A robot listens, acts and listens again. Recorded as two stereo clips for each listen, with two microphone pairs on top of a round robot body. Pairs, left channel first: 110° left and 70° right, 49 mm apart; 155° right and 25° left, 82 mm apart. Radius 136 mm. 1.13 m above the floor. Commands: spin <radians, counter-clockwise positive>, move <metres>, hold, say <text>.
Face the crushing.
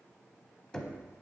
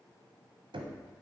hold
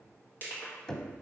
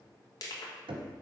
spin 2.88
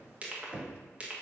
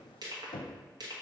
spin -0.17
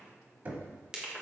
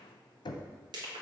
say Facing the crushing.